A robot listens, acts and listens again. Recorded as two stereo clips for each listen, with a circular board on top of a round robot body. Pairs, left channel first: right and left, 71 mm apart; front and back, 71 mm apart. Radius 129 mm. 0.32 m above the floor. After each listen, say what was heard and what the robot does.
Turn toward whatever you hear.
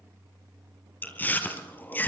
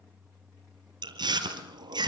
The chewing: 160° right. Turn 160° right.
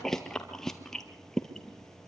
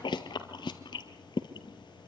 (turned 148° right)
The chewing is now 10° right. Turn 10° right.
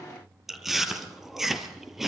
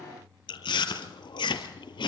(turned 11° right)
Facing the chewing.